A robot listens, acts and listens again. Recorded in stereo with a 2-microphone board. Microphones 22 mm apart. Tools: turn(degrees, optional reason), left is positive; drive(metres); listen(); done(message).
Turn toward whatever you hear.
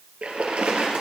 turn(degrees=-90)
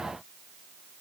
done("I heard a splash from this way, but can't make it out now.")